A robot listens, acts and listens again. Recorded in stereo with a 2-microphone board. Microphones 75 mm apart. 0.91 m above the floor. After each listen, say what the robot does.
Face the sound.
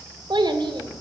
Turn 90° right.
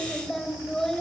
Facing the child speaking, 2 to 4 m away.